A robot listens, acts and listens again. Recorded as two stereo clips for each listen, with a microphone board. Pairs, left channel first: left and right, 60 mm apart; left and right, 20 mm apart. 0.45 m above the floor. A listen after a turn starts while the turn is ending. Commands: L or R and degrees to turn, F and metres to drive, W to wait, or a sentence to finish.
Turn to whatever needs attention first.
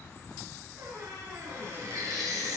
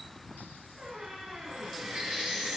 R90
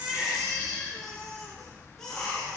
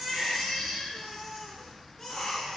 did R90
L10
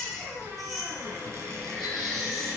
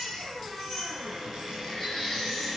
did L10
Found it: a baby crying, straight ahead.